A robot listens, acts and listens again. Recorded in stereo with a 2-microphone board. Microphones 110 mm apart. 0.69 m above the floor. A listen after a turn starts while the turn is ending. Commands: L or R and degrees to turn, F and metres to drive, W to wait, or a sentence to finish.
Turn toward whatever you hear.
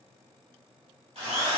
R70
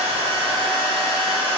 R45
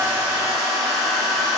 Facing the drill.